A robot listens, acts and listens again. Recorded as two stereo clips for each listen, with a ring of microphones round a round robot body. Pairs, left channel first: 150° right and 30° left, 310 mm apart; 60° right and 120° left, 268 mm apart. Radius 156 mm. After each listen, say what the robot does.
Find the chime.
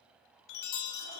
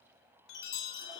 Turn 120° right.
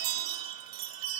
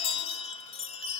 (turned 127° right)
Turn 10° left.
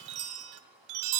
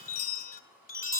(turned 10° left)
Facing the chime, 1 to 2 m away.